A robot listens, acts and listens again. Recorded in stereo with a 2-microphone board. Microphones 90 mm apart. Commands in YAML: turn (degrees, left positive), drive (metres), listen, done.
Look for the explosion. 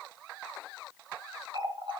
listen: true
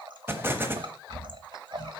turn: -25
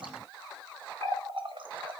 listen: true
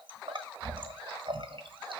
done: "I heard an explosion, but can't make it out now. It was about straight ahead or 130° right."